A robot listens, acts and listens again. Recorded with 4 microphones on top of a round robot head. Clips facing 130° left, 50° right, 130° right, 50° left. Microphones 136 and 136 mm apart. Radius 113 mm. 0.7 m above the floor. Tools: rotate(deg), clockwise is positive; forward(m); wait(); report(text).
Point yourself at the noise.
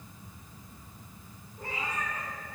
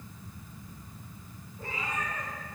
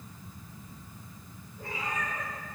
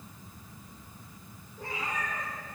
rotate(-70)
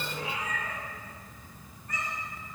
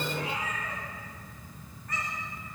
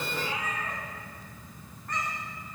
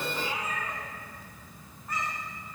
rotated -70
rotate(30)
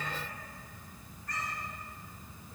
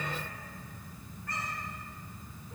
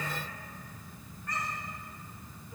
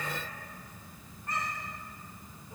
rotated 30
rotate(15)
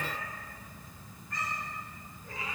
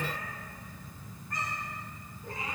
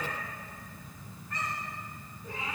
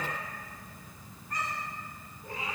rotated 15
report("Found it: a cat meowing, straight ahead.")